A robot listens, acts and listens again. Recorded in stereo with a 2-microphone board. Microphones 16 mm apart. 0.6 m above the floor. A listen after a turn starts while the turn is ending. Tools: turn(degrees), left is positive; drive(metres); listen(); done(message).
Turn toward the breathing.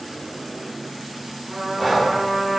turn(degrees=-30)
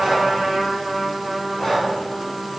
turn(degrees=25)
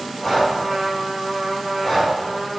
turn(degrees=15)
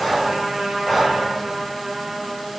done("Found it: breathing, straight ahead, 2 to 4 m away.")